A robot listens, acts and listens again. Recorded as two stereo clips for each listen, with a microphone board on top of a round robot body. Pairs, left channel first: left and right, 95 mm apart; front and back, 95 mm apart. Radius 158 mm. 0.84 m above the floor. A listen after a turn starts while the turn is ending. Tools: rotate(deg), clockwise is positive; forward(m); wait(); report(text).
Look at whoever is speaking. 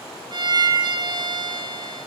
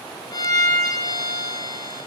wait()
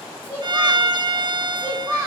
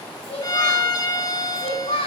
report("Found it: a child speaking, straight ahead.")